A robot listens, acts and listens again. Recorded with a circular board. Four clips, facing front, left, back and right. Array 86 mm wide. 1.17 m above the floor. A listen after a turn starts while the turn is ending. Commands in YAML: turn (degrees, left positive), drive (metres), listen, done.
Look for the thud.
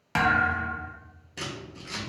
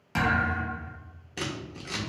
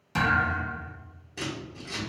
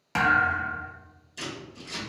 turn: -25
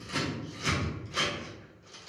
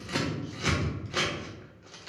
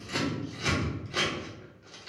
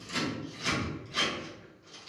done: "I heard a thud from this way, but can't make it out now."